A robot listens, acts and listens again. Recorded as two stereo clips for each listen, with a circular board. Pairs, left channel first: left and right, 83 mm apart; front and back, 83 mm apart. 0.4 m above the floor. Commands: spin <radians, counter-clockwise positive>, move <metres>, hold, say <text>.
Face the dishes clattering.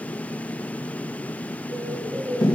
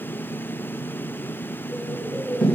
hold
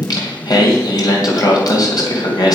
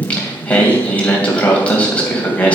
hold
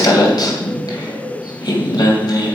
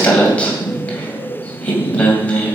say I can't make out dishes clattering, only a bird and singing.